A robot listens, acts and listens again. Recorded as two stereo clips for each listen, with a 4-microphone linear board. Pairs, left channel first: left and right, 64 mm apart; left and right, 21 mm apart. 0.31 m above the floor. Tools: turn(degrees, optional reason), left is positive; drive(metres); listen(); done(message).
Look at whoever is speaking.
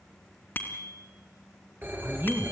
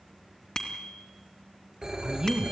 turn(degrees=-35, reason="The woman speaking: about 35° right or 145° right.")
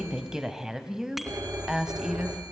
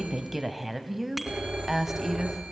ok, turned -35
turn(degrees=-10, reason="So it is at 10° right.")
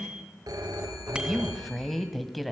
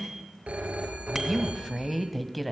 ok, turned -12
done("Facing the woman speaking.")